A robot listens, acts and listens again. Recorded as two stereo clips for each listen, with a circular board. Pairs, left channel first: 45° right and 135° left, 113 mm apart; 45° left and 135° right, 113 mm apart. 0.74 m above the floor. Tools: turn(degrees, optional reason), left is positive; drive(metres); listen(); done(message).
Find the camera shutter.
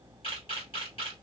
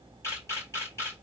turn(degrees=-15, reason="The camera shutter: 15° right.")
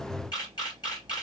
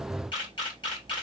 done("Found it: a camera shutter, straight ahead, 2 to 4 m away.")